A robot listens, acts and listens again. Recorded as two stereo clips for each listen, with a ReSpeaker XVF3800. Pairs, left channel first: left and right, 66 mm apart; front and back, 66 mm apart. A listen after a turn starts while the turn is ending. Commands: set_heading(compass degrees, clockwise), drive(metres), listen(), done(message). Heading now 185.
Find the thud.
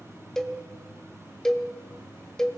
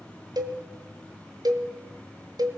listen()
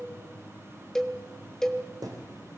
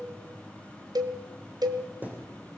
set_heading(300)
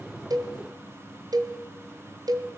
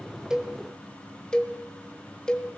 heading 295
done("Facing where the thud came from. I can't hear it now.")